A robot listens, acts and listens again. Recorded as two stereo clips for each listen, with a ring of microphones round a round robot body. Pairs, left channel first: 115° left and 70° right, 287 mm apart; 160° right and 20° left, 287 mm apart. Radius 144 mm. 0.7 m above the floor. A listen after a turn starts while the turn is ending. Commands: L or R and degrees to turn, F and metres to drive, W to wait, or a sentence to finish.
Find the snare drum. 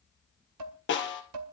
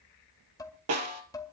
L60
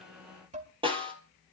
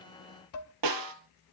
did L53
Found it: a snare drum, straight ahead.